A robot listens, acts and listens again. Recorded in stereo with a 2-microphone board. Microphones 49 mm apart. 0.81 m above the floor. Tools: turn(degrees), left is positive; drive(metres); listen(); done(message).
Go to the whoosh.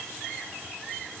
listen()
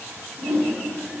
turn(degrees=-55)
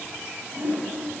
turn(degrees=-65)
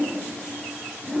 drive(metres=1.0)
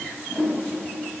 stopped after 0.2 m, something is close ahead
turn(degrees=10)
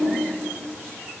done("Blocked. The whoosh is further on, straight ahead.")